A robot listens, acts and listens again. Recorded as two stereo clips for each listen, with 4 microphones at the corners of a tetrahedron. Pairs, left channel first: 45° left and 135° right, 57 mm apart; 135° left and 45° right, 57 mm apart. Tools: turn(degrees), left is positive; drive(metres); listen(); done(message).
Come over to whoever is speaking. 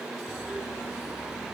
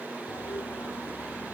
listen()
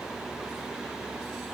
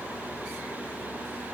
listen()
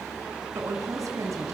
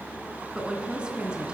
turn(degrees=-115)
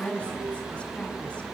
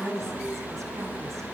turn(degrees=-25)
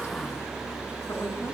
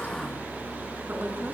turn(degrees=10)
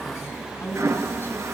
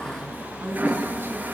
drive(metres=1.0)
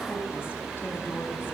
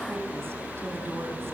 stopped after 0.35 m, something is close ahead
listen()
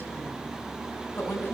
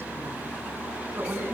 done("Blocked. The woman speaking is further on, straight ahead.")